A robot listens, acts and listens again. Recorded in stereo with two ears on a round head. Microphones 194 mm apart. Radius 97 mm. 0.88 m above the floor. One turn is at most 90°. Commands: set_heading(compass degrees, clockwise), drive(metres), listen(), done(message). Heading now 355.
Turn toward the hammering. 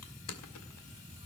listen()
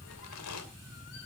listen()
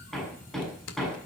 set_heading(325)
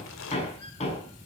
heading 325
set_heading(235)
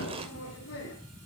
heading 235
set_heading(175)
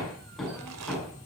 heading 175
done("Facing the hammering, over 4 m away.")